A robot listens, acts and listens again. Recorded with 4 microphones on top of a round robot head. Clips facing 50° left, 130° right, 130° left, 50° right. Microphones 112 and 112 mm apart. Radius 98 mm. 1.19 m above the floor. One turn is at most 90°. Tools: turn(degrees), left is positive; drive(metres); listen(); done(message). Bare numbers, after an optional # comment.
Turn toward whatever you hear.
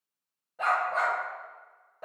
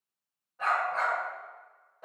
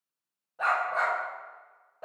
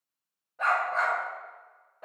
# The dog barking: 80° left.
turn(80)
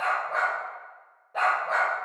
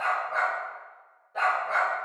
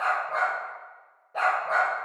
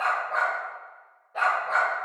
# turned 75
# The dog barking is now 90° left.
turn(90)
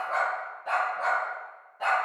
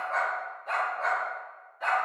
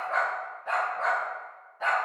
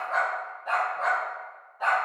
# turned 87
# The dog barking is now 30° left.
turn(30)
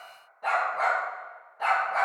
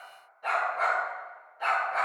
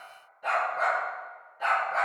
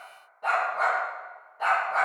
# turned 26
done("Found it: a dog barking, straight ahead, 2 to 4 m away.")